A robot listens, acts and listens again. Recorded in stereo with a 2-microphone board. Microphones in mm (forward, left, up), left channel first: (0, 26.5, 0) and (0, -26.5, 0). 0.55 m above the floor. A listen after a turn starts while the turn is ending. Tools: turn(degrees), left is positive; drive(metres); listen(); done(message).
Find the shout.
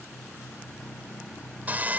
listen()
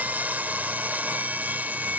listen()
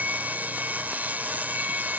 done("I can't make out a shout, only sawing.")